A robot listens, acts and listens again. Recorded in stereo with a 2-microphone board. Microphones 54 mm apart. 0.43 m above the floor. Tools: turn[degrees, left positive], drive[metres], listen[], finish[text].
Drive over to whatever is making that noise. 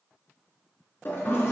Thought: The toilet flushing: about 45° left or 135° left.
Action: turn[45]
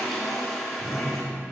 Action: drive[1.0]
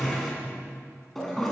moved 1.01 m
Action: drive[1.0]
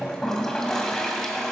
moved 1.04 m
Thought: The toilet flushing is now 10° left.
Action: turn[10]
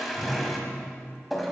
Action: drive[1.0]
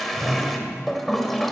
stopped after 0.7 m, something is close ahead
Action: finish[I am next to the toilet flushing.]